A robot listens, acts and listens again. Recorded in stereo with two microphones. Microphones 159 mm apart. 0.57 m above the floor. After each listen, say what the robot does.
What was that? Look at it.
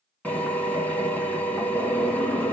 Turn 30° left.
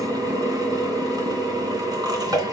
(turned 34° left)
Turn 25° right.
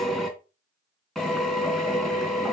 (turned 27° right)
Facing the drill.